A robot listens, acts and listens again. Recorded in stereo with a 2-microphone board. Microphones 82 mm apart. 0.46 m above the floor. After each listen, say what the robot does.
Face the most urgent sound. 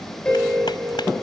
Turn 40° right.
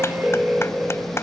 Facing the alarm.